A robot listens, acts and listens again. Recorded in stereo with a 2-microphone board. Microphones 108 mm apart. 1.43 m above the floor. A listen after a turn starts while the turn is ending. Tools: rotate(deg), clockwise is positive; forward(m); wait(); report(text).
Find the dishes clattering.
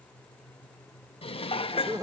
rotate(-65)
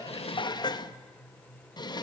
rotate(-45)
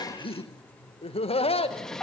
report("Found it: dishes clattering, straight ahead, 1 to 2 m away.")